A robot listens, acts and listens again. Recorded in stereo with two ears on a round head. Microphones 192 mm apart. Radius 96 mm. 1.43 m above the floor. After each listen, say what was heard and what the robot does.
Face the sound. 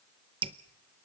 The dripping: about 25° right or 155° right. Turn 25° right.
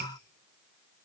So it is at 125° right. Turn 125° right.
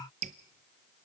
The dripping is now 40° right. Turn 40° right.
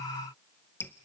The dripping is now 10° left. Turn 10° left.
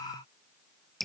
Facing the dripping.